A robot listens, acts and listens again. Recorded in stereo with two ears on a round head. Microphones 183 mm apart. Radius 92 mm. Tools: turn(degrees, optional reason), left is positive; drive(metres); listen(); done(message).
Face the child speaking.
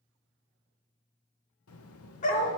turn(degrees=90)
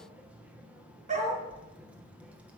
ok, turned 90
done("Found it: a child speaking, straight ahead.")